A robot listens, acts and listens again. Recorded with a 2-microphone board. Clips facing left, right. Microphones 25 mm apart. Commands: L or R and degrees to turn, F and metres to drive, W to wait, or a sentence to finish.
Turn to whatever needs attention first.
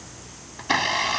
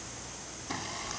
W
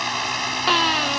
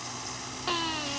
L45
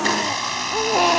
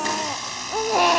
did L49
Found it: a baby crying, straight ahead.